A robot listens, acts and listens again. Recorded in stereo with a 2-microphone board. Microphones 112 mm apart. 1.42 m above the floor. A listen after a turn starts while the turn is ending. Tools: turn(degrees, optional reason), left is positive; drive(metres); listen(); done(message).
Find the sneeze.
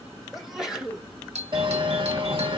turn(degrees=-30)
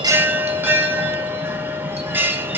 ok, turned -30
listen()
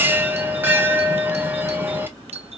done("I heard a sneeze, but can't make it out now. It was about 25° left or 145° right.")